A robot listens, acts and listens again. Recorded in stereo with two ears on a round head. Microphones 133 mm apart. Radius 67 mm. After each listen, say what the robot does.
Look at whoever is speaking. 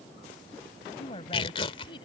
Turn 35° left.
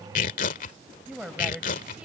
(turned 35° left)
Facing the woman speaking.